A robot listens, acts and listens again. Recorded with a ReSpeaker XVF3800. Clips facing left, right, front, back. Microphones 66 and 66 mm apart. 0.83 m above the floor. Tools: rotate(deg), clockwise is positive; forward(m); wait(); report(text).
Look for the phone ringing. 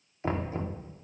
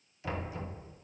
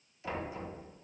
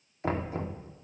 wait()
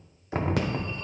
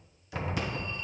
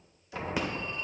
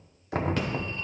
rotate(-80)
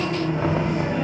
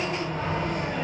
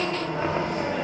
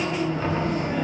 rotate(-10)
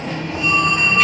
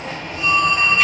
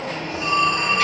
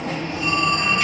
report("Found it: a phone ringing, straight ahead, 1 to 2 m away.")